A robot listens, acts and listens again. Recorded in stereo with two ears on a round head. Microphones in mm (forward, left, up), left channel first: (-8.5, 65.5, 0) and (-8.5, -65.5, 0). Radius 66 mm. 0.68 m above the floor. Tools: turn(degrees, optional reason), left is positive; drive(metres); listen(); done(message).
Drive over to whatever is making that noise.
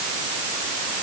listen()
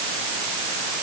listen()
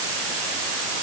done("I can't make out anything.")